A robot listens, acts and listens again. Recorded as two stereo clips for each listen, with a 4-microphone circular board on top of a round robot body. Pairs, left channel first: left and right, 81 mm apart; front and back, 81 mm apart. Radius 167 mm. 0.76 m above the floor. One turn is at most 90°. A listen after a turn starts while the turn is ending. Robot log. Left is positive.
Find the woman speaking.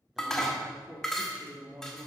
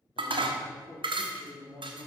note: The woman speaking: 25° right.
cmd yaw -25
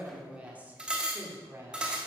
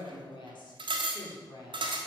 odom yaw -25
note: The woman speaking is now 30° right.
cmd yaw -30
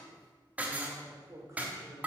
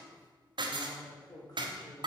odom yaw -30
note: The woman speaking is now 35° right.
cmd yaw -35
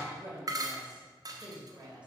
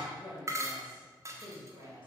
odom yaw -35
note: The woman speaking is now 15° right.
cmd yaw -15
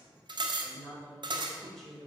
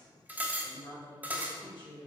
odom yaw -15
end: Facing the woman speaking.